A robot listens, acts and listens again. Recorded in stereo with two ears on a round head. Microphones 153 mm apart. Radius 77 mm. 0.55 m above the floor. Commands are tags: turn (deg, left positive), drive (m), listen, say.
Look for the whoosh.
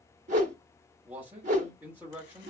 <turn deg="-50"/>
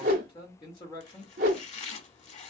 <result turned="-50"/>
<turn deg="-70"/>
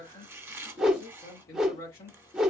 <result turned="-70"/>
<say>Facing the whoosh.</say>